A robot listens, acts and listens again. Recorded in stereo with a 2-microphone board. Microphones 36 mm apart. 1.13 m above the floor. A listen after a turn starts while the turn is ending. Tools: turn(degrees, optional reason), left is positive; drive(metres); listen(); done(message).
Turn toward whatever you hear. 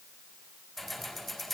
turn(degrees=30)
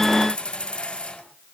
turn(degrees=155, reason="So it is at 155° left.")
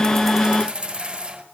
turn(degrees=-25, reason="The keys jangling is now 25° right.")
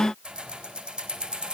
turn(degrees=-25, reason="The keys jangling is now 25° right.")
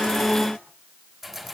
done("Facing the keys jangling, 2 to 4 m away.")